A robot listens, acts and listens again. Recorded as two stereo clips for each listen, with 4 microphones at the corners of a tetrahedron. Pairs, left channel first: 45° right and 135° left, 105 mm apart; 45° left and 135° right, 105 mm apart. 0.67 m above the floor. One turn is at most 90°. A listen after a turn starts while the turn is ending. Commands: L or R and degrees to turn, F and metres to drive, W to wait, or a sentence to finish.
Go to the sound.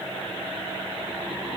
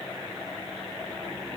W
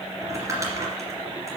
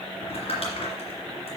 L75
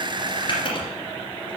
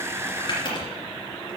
F1.0
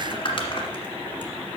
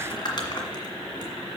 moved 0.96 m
F1.0
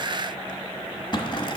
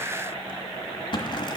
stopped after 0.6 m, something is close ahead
Arrived at the crumpling, straight ahead.